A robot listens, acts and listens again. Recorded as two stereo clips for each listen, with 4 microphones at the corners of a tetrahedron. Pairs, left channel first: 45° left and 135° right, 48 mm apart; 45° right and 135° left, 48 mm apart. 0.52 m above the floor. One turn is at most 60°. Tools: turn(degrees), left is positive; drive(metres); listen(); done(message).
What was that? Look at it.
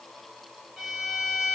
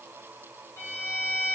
turn(degrees=-55)
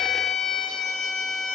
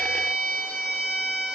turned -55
turn(degrees=-30)
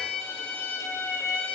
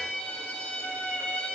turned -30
turn(degrees=10)
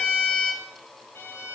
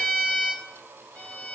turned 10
done("Facing the violin, 1 to 2 m away.")